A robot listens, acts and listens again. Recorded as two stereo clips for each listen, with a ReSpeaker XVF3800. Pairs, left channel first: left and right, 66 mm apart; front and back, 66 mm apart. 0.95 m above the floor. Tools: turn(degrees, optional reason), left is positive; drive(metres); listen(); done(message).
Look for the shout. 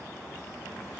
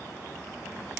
listen()
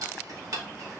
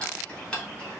listen()
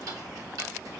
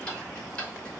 done("I can't make out a shout, only ticking.")